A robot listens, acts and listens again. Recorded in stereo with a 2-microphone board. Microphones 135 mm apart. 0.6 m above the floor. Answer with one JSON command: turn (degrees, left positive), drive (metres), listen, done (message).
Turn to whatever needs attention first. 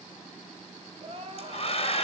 {"turn": -50}
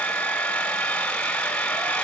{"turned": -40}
{"listen": true}
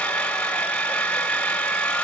{"listen": true}
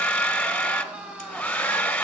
{"turn": -10}
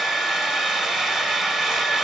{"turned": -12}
{"listen": true}
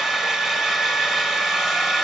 {"listen": true}
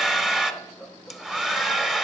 {"done": "Facing where the crying came from. I can't hear it now."}